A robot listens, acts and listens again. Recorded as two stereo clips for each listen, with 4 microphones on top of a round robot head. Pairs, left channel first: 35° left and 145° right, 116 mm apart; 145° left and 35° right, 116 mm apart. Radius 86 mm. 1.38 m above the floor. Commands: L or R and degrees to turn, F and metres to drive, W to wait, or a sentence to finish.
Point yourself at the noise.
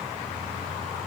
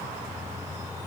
W
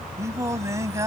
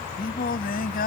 L145
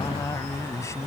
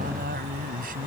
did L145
R35
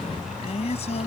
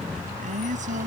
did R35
Found it: singing, straight ahead.